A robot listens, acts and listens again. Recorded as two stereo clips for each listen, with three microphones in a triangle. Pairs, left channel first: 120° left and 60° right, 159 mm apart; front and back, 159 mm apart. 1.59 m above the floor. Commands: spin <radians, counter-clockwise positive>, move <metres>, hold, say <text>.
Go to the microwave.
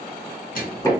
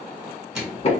spin 1.66
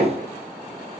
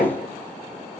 hold
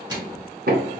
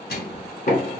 move 1.0
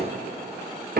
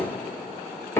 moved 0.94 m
hold
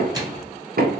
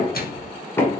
spin 0.17
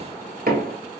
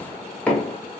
hold
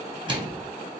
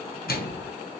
move 1.0
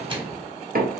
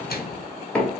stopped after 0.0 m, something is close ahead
say Arrived at the microwave, straight ahead.